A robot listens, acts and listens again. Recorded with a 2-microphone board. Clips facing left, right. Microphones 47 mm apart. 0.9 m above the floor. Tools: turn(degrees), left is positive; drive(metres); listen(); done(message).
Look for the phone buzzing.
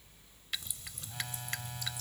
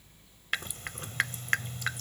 turn(degrees=90)
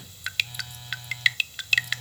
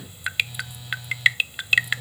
turn(degrees=10)
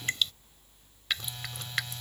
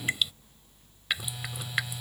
done("Facing the phone buzzing.")